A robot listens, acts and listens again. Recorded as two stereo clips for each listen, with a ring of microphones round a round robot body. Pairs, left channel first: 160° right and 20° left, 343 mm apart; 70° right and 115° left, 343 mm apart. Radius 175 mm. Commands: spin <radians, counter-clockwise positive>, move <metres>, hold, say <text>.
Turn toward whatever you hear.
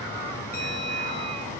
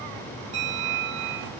spin 2.36
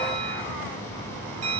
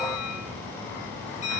say Found it: a bell, straight ahead, 2 to 4 m away.